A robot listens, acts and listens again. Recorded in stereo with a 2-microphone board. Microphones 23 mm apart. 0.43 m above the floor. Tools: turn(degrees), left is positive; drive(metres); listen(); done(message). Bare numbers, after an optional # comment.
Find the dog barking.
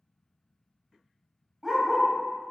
turn(-30)
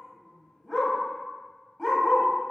# So it is at 15° left.
turn(15)
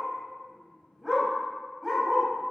done("Facing the dog barking.")